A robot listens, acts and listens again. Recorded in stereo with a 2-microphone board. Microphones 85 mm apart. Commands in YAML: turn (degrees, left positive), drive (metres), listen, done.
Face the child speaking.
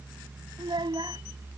turn: -65
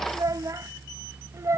turn: -35
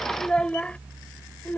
turn: 25
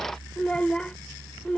turn: 15
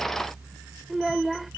done: "Found it: a child speaking, straight ahead."